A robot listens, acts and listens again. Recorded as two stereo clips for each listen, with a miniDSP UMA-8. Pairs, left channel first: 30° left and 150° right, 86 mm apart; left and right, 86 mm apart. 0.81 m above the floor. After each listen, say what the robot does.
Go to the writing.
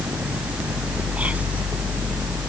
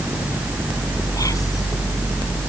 Keep listening.
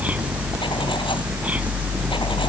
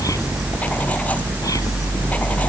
Keep listening.
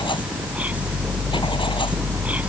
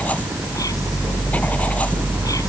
I can't make out writing.